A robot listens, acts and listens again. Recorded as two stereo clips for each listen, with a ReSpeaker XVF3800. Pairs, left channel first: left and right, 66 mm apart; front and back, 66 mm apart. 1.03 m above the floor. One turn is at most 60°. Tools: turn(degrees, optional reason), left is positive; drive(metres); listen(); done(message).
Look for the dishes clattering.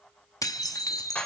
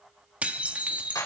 turn(degrees=60, reason="The dishes clattering: 115° left.")
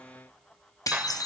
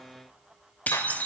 turn(degrees=60, reason="The dishes clattering is now 65° left.")
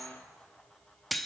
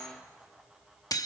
done("Facing the dishes clattering.")